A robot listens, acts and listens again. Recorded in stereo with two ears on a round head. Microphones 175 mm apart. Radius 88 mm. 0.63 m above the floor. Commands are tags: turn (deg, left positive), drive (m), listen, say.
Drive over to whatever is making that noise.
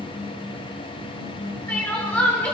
<turn deg="30"/>
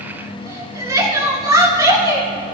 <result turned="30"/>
<turn deg="-20"/>
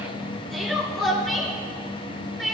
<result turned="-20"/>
<drive m="1.0"/>
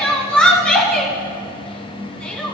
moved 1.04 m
<drive m="1.0"/>
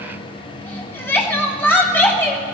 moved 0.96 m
<turn deg="10"/>
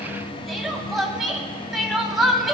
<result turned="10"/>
<drive m="1.0"/>
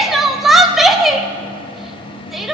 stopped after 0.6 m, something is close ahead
<say>Arrived at the crying, straight ahead.</say>